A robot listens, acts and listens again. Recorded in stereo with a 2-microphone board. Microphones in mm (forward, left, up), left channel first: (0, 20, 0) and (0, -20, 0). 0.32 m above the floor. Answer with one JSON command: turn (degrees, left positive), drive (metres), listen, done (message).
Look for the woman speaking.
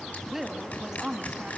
{"turn": -20}
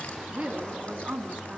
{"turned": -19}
{"turn": -120}
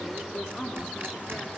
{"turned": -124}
{"turn": 15}
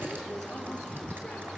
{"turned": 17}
{"listen": true}
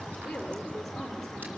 {"done": "Found it: a woman speaking, straight ahead."}